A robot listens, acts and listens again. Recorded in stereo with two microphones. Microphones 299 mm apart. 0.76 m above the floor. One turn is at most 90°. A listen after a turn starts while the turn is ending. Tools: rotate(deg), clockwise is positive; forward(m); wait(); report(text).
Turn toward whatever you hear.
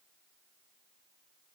wait()
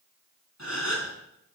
rotate(-60)
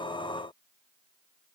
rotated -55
wait()
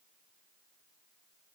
report("I heard a gasp, but can't make it out now. It was about 5° left or 65° left.")